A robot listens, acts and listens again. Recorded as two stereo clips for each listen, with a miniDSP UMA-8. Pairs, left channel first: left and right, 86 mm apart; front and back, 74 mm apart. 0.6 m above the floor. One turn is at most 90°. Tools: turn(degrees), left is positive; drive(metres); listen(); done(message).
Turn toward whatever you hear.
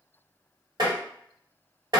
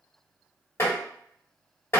turn(degrees=-55)
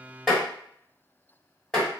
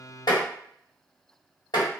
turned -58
done("Facing the tapping, 1 to 2 m away.")